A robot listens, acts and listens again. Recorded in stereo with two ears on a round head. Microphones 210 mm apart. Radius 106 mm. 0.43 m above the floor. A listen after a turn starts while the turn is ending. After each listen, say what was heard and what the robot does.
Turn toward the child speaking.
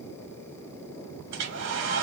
Keep listening.
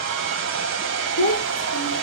The child speaking: about 40° left or 140° left. Turn 40° left.
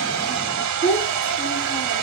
So it is at 10° left. Turn 10° left.
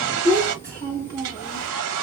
The child speaking is now 25° right. Turn 25° right.
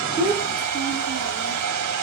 Keep listening.
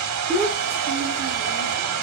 Found it: a child speaking, straight ahead.